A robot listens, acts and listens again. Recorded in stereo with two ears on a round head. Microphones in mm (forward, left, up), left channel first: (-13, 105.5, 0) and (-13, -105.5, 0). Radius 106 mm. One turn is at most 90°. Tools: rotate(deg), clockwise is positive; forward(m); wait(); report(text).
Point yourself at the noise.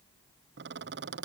rotate(50)
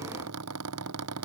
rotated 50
rotate(75)
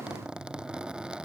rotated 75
report("Found it: a squeak, straight ahead.")